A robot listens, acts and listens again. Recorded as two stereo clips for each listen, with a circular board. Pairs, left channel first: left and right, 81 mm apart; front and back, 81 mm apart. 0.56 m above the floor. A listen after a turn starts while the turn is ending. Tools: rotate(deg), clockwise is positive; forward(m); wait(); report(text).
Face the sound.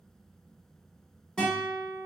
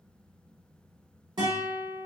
rotate(-165)
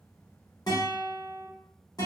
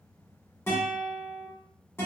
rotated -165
rotate(-55)
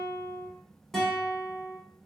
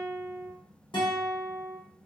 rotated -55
report("Facing the guitar, 1 to 2 m away.")